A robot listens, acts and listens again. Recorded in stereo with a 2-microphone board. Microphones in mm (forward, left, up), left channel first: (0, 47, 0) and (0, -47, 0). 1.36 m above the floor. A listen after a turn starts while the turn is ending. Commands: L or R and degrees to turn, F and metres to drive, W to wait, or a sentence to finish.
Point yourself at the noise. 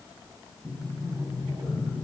R35
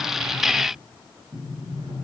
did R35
R110
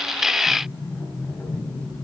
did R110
L15
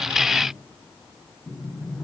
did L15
Facing the sliding door, over 4 m away.